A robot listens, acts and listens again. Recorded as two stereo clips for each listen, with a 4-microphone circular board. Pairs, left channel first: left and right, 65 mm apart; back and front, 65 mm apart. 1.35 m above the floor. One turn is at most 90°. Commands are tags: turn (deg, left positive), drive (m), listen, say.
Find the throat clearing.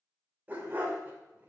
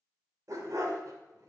<listen/>
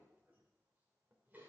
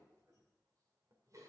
<listen/>
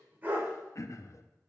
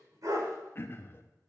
<turn deg="90"/>
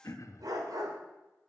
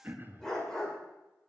<turn deg="55"/>
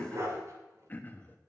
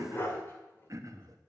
<turn deg="30"/>
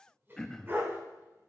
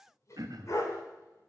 <turn deg="10"/>
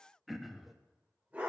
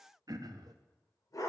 <say>Facing the throat clearing, under 1 m away.</say>